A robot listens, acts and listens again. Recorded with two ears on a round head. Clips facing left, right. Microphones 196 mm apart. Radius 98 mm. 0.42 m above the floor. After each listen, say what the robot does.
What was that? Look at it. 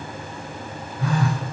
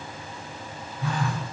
Turn 55° left.
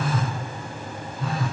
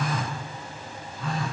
Found it: a phone buzzing, straight ahead.